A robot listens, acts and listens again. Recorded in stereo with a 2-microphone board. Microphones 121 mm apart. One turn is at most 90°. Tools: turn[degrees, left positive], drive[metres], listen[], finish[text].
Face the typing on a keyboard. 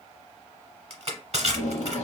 Action: listen[]
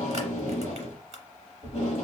Action: listen[]
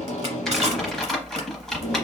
Action: turn[30]
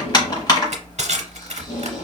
Thought: So it is at 145° left.
Action: turn[90]
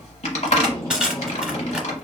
Thought: The typing on a keyboard is now 75° left.
Action: turn[75]
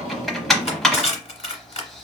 Action: finish[Facing the typing on a keyboard, under 1 m away.]